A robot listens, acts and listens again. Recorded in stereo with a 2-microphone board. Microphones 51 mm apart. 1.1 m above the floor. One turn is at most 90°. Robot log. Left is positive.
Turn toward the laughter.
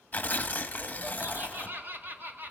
note: The laughter: about 40° right or 140° right.
cmd yaw -40
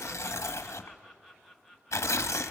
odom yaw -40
end: Facing the laughter.